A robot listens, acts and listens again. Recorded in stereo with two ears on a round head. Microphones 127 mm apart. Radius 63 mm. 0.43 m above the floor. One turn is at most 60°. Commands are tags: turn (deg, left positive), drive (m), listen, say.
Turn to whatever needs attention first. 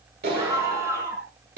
<turn deg="-20"/>
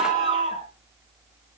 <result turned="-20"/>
<turn deg="-60"/>
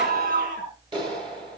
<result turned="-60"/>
<turn deg="-60"/>
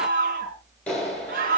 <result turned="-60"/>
<turn deg="-60"/>
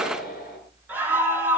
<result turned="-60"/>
<turn deg="-10"/>
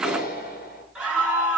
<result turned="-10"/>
<say>Facing the scream.</say>